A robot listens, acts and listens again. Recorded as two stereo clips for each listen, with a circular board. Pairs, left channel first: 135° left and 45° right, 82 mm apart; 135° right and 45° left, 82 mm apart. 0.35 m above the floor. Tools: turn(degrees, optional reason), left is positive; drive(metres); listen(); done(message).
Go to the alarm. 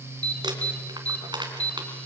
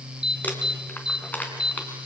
turn(degrees=-150, reason="The alarm: 150° right.")
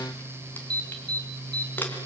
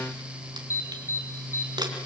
turn(degrees=-15, reason="The alarm is now 15° right.")
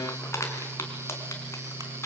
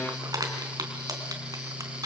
listen()
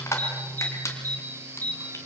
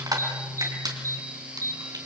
drive(metres=1.0)
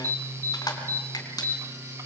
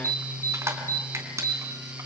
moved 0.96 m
drive(metres=1.0)
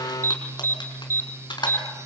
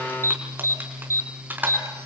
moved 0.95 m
drive(metres=1.0)
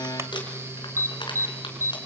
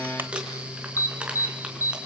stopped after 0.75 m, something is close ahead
done("I am next to the alarm.")